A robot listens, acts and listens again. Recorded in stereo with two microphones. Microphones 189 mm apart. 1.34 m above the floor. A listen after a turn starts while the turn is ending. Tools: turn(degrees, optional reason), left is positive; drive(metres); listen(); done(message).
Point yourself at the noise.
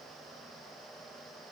listen()
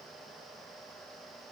listen()
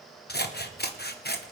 turn(degrees=60, reason="The scissors: about 60° left or 120° left.")
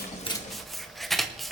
done("Found it: scissors, straight ahead.")